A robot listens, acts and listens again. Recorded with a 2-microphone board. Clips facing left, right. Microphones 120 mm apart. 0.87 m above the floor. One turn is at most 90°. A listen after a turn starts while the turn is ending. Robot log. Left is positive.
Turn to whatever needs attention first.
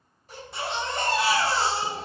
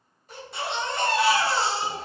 cmd yaw +30
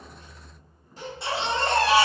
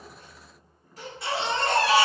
note: So it is at 150° left.
cmd yaw +90
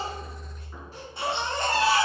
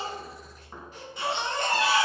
note: The baby crying is now 40° left.
cmd yaw +40
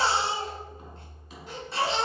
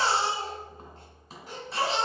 end: Facing the baby crying.